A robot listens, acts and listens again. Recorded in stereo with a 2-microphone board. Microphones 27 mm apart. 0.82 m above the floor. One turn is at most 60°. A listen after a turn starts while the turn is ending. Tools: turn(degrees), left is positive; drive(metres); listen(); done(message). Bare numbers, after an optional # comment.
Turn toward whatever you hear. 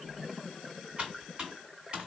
# The typing on a keyboard: about 40° right or 140° right.
turn(-40)
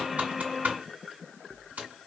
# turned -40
# So it is at 100° right.
turn(-60)
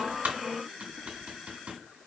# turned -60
# The typing on a keyboard is now 60° right.
turn(-60)
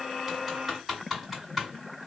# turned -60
done("Found it: typing on a keyboard, straight ahead.")